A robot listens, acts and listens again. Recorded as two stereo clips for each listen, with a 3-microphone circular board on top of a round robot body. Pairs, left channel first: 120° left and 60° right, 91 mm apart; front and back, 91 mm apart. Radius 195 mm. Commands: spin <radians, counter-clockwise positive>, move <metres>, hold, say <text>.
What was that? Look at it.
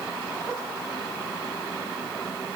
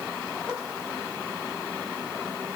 hold
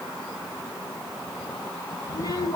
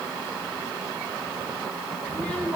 spin 1.31
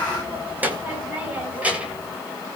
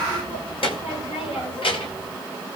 spin 0.26
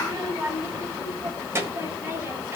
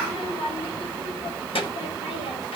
say Facing the child speaking, over 4 m away.